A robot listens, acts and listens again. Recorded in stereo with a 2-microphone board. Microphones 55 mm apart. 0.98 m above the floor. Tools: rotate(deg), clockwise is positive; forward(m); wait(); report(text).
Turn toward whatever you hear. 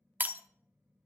rotate(35)
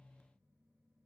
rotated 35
wait()
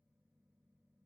report("I heard breaking glass, but can't make it out now. It was about straight ahead or 110° right.")